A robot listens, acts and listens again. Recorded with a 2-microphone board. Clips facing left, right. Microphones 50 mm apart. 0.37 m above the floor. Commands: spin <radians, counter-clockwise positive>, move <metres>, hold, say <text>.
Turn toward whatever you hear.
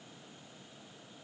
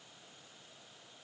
hold
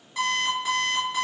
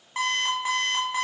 spin -0.79
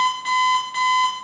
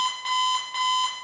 say Found it: an alarm clock, straight ahead, 1 to 2 m away.